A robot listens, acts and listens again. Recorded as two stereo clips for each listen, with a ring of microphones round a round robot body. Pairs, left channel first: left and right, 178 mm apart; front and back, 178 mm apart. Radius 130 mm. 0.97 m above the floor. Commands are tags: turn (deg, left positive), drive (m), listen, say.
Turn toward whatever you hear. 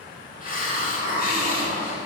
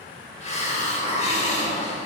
<turn deg="55"/>
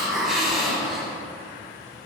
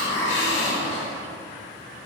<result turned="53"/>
<say>Found it: a hiss, straight ahead.</say>